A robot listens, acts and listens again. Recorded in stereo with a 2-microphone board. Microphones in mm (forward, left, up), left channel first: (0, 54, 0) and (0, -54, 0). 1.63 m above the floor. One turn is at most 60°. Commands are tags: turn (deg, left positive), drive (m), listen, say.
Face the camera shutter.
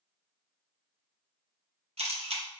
<turn deg="-60"/>
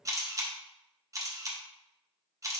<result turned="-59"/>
<turn deg="-30"/>
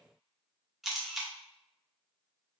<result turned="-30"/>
<say>Found it: a camera shutter, straight ahead, under 1 m away.</say>